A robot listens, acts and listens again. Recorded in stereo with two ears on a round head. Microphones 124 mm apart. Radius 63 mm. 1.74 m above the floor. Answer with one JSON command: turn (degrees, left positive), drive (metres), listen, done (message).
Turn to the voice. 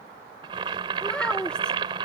{"turn": 30}
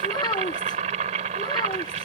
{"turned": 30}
{"turn": 145}
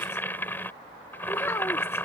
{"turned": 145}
{"turn": 20}
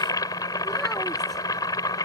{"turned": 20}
{"listen": true}
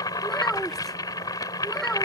{"done": "Found it: a child speaking, straight ahead."}